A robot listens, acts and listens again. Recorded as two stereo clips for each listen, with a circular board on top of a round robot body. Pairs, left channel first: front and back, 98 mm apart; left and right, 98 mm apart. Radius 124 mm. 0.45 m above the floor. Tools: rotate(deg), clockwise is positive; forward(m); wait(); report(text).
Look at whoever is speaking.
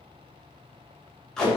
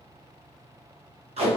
wait()
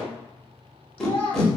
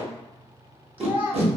rotate(20)
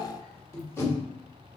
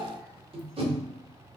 report("Facing the child speaking.")